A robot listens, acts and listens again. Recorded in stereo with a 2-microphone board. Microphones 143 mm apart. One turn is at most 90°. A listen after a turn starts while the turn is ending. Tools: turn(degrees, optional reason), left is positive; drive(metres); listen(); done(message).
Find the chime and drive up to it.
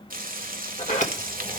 listen()
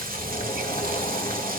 listen()
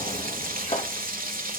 done("I can't make out a chime, only a sliding door and frying.")